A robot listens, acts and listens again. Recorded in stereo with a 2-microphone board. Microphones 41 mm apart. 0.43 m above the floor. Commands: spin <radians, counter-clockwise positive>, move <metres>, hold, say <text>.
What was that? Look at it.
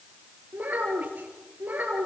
spin -0.70
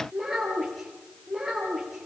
say Facing the child speaking, over 4 m away.